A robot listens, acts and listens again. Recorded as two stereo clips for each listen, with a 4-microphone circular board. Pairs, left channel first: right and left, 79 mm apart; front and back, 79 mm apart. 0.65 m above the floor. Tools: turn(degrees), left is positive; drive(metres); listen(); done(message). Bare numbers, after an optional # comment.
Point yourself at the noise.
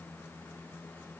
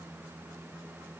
listen()
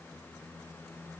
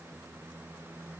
listen()
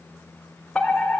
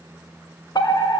# The fire alarm: 15° right.
turn(-15)
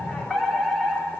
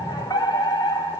done("Found it: a fire alarm, straight ahead, 2 to 4 m away.")